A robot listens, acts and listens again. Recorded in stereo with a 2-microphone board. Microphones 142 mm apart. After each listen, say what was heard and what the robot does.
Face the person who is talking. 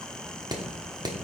Keep listening.
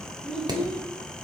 Turn 30° left.
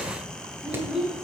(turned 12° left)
Facing the child speaking.